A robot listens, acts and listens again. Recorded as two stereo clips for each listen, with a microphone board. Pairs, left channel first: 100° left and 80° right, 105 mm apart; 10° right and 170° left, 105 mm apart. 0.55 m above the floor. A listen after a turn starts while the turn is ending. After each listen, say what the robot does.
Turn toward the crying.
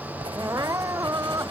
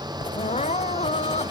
Turn 15° right.
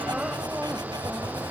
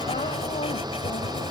Keep listening.
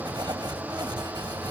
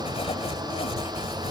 Keep listening.
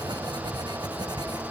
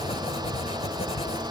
Facing where the crying came from. I can't hear it now.